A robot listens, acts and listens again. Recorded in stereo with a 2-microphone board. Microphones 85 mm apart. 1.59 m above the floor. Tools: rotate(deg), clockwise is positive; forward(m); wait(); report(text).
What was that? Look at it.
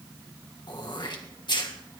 rotate(-60)
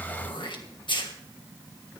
rotate(-65)
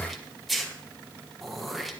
report("Facing the throat clearing.")